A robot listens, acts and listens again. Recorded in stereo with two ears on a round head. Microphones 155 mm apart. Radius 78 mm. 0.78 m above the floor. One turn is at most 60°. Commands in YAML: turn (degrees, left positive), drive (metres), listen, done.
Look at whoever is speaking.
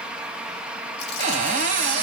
listen: true
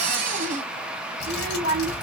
turn: -55
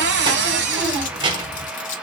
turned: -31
turn: -30
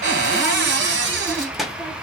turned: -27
done: "Found it: a child speaking, straight ahead."